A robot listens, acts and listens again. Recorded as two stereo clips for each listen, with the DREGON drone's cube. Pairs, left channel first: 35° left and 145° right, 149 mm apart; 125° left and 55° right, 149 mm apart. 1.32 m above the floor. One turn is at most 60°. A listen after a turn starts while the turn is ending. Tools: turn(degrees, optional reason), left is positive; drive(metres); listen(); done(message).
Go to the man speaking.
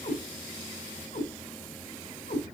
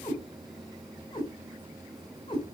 listen()
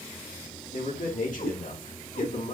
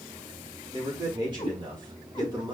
drive(metres=1.0)
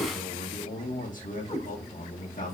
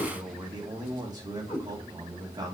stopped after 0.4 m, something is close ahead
turn(degrees=10, reason="The man speaking is now 10° left.")
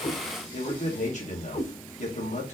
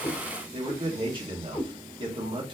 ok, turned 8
done("Blocked. The man speaking is further on, straight ahead.")